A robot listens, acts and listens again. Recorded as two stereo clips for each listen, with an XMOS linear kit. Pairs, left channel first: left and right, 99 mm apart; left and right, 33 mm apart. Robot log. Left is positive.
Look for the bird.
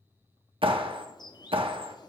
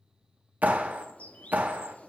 note: The bird: about 45° left or 135° left.
cmd yaw +45
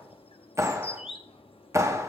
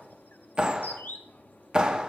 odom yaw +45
note: So it is at 85° left.
cmd yaw +85
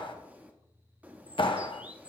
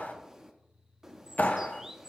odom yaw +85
note: The bird is now 15° right.
cmd yaw -15
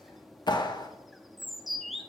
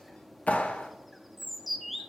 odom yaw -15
end: Found it: a bird, straight ahead, under 1 m away.